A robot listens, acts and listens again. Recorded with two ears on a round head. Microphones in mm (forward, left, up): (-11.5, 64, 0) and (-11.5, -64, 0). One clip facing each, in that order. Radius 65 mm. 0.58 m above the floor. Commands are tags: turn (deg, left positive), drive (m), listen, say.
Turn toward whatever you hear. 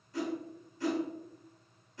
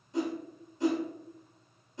<turn deg="-20"/>
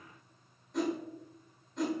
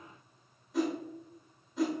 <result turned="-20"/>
<say>Found it: a whoosh, straight ahead, 1 to 2 m away.</say>